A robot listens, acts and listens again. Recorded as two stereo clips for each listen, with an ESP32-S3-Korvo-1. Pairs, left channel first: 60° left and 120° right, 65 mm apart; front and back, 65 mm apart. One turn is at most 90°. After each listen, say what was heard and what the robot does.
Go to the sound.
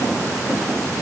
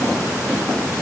Keep listening.
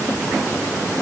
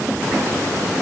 Keep listening.
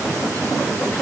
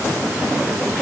I can't make out anything to turn to.